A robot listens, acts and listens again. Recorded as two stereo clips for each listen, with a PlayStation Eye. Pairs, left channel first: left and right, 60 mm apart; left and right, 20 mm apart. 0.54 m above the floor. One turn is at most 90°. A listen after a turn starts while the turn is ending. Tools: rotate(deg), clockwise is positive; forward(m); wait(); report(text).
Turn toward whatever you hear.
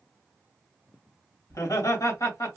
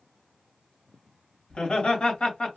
rotate(-65)
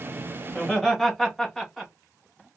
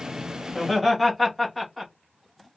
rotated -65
report("Facing the laughter.")